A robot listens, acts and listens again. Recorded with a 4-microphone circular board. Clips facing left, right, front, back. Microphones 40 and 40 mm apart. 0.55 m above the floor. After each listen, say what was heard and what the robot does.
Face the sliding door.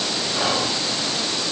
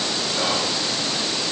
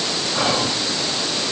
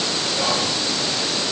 Keep listening.
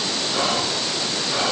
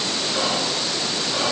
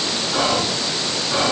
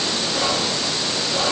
Keep listening.
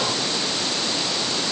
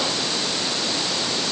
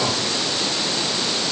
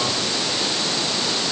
I can't make out a sliding door, only whispering.